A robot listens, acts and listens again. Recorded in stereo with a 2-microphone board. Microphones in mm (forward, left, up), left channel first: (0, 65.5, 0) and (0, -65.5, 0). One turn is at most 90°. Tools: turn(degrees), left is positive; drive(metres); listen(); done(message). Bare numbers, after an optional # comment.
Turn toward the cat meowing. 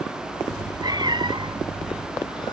# The cat meowing: about 45° right or 135° right.
turn(-45)
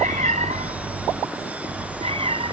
# The cat meowing: about 45° right or 135° right.
turn(-45)
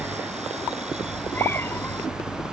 # So it is at 15° left.
turn(15)
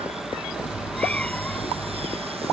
# The cat meowing is now 10° left.
turn(10)
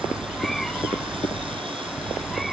done("Facing the cat meowing.")